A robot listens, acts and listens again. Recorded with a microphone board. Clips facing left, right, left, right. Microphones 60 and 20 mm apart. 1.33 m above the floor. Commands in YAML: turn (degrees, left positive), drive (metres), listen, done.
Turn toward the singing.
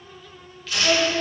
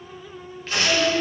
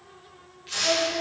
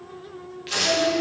turn: 45
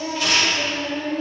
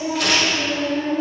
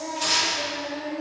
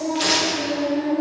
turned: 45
turn: -15
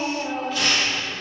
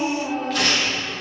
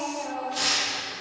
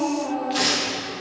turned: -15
done: "Facing the singing."